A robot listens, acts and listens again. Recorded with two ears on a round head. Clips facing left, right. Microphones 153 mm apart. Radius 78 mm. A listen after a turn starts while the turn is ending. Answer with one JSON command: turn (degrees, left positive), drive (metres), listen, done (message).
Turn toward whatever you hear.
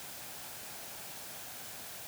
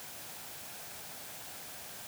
{"listen": true}
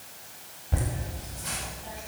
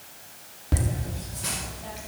{"turn": -75}
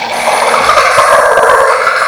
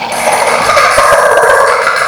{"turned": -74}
{"turn": -25}
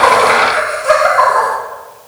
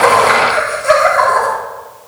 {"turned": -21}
{"turn": -15}
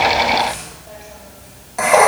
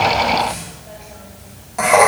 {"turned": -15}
{"done": "Facing the laughter."}